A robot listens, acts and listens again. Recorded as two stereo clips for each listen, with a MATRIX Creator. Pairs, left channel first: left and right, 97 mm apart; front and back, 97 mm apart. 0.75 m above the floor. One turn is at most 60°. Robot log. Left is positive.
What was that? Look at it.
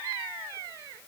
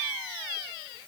cmd idle
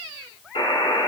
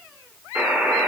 note: The buzzer: 105° left.
cmd yaw +60
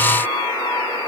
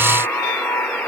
note: The buzzer is now 75° left.
cmd yaw +60
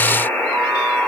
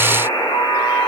note: The buzzer is now 15° left.
cmd yaw +15
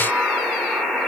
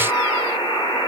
end: Found it: a buzzer, straight ahead, 2 to 4 m away.